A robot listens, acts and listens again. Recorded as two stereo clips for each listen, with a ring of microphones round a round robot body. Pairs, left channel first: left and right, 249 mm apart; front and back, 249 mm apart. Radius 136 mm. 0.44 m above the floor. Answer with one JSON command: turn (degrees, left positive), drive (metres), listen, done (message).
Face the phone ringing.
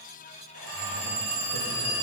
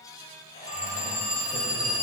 {"turn": -95}
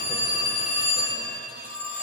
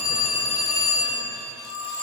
{"turn": 25}
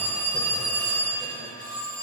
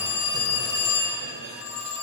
{"done": "Found it: a phone ringing, straight ahead."}